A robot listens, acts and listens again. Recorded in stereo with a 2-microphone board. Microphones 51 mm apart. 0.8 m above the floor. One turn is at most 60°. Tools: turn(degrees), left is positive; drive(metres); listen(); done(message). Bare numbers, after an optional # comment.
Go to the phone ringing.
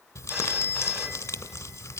# The phone ringing: about 30° right or 150° right.
turn(-30)
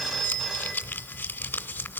drive(1.0)
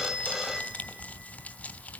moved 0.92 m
drive(1.0)
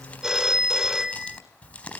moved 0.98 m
# The phone ringing is now 10° right.
turn(-10)
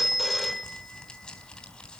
drive(1.0)
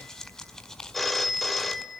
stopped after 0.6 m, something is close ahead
done("I am next to the phone ringing.")